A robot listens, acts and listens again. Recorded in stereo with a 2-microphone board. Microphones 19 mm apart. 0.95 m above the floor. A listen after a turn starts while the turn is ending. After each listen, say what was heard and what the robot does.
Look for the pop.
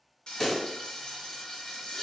The pop: about 15° left or 165° left. Turn 15° left.
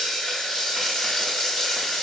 Keep listening.
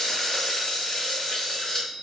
I heard a pop, but can't make it out now. It was about straight ahead or 150° left.